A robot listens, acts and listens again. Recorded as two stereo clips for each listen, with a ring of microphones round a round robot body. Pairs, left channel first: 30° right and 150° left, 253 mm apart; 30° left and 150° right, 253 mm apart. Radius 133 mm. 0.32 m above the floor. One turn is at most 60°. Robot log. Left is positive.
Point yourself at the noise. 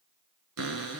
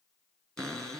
note: The cupboard door: 120° left.
cmd yaw +60
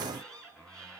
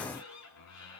note: The cupboard door is now 60° left.
cmd yaw +60
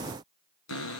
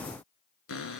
end: Found it: a cupboard door, straight ahead.